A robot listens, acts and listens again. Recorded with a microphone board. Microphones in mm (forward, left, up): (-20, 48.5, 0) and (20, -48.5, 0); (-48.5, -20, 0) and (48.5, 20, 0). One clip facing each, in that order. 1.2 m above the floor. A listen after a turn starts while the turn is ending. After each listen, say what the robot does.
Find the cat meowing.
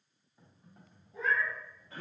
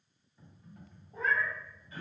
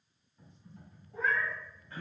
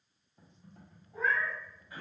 Turn 60° right.
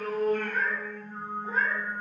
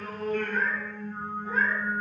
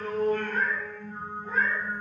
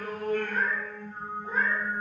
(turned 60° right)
Turn 95° left.
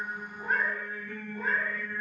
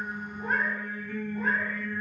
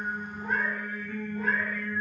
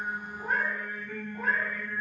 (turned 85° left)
Turn 45° left.
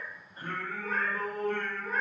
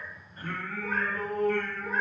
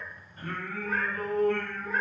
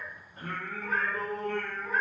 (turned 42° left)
Facing the cat meowing.